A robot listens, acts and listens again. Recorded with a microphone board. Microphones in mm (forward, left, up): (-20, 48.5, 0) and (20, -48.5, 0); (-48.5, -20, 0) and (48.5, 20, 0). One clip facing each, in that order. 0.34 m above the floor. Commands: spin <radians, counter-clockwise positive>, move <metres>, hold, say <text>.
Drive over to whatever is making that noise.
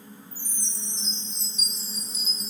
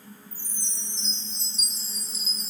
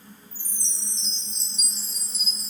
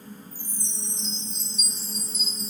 spin -0.26
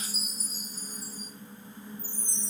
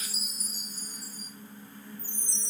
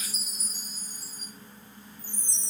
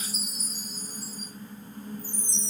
move 1.0
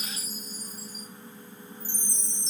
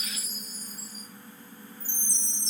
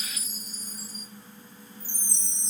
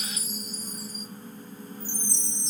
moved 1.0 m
move 1.0
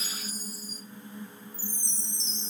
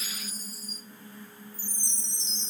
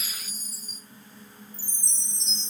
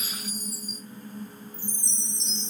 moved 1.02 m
move 1.0
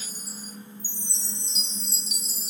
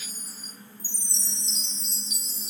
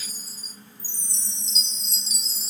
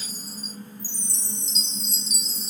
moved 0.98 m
move 1.0
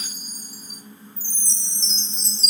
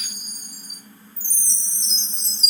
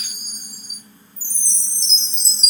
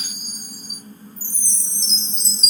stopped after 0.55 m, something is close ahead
say I am next to the chime.